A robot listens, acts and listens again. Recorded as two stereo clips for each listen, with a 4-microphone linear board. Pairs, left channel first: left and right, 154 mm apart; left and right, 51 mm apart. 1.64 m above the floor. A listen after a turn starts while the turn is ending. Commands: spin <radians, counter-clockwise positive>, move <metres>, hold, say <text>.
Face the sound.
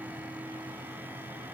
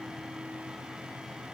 hold
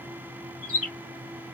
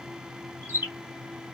spin -0.96
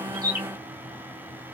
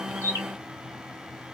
hold
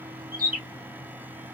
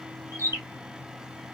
spin -1.22
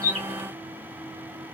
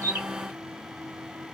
hold
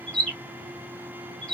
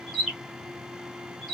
say Found it: a bird, straight ahead, 2 to 4 m away.